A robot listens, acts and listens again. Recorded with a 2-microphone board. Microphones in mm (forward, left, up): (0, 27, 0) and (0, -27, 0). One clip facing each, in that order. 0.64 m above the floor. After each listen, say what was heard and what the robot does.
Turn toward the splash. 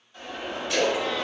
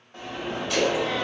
Turn 30° left.
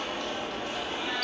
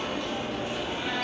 Keep listening.
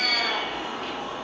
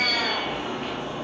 I heard a splash, but can't make it out now. It was about 30° right or 150° left.